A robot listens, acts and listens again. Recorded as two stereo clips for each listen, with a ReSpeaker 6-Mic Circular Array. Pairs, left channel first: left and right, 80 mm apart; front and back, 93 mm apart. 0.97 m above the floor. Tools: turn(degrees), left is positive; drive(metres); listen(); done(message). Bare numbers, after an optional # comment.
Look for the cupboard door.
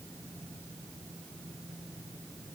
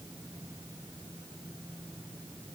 listen()
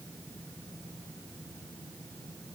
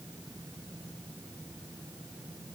listen()
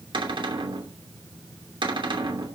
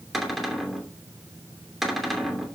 # The cupboard door: 90° right.
turn(-90)
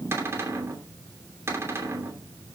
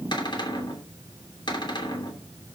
# The cupboard door is now 30° right.
turn(-30)
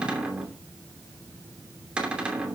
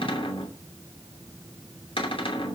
# The cupboard door is now 10° right.
turn(-10)
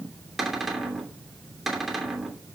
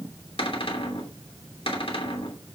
done("Found it: a cupboard door, straight ahead.")